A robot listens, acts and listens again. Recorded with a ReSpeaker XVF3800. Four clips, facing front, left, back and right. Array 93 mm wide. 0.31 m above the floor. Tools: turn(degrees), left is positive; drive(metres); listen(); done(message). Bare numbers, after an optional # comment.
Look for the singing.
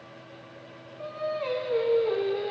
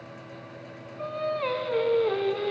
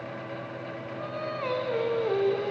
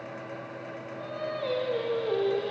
# The singing: 110° left.
turn(110)
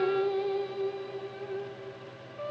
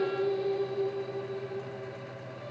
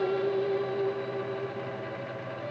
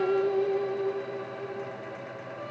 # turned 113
# The singing is now 30° right.
turn(-30)
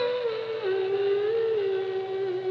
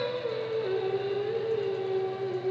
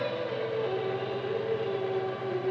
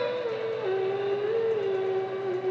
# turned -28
# The singing is now 20° right.
turn(-20)
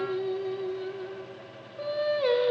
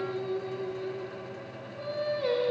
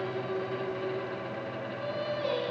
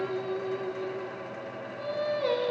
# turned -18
done("Found it: singing, straight ahead.")